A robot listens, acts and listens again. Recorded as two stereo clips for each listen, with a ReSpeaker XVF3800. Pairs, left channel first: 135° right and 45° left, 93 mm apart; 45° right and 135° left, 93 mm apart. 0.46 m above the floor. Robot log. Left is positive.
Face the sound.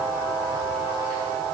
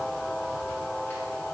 cmd idle
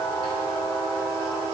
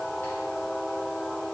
cmd idle
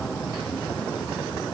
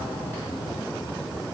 end: I can't make out anything to turn to.